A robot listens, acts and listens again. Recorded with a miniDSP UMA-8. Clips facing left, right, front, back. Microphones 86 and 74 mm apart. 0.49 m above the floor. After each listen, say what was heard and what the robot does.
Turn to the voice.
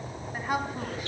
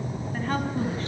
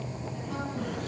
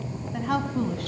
The woman speaking: 170° left. Turn 170° left.
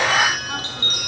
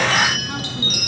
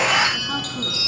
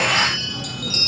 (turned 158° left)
Nothing new. It was at 10° left. Turn 10° left.
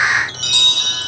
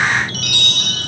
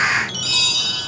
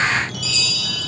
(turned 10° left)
Keep listening.
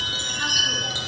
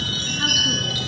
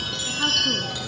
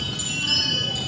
Facing where the woman speaking came from. I can't hear it now.